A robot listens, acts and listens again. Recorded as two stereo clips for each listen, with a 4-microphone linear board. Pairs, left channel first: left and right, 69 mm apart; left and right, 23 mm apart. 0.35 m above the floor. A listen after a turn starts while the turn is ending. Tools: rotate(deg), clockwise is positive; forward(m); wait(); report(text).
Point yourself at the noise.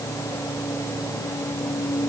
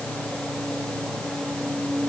wait()
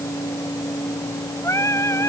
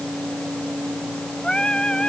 rotate(-45)
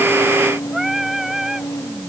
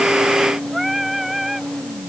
report("Facing the singing.")